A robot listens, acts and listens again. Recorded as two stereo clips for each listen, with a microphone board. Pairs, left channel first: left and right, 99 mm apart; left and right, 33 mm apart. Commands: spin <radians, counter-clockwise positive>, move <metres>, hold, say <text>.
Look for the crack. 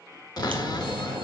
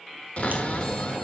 spin -0.96
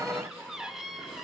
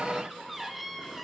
hold
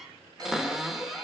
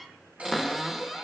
say I heard a crack, but can't make it out now. It was about straight ahead or 70° right.